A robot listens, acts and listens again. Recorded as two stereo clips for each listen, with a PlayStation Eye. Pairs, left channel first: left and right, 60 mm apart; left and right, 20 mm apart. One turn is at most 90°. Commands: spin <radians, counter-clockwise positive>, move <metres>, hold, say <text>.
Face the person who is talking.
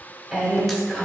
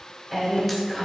spin -0.52
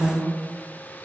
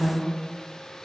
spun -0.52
spin -1.57
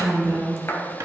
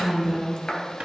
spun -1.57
spin -0.87
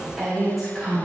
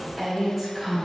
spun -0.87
say Found it: a woman speaking, straight ahead.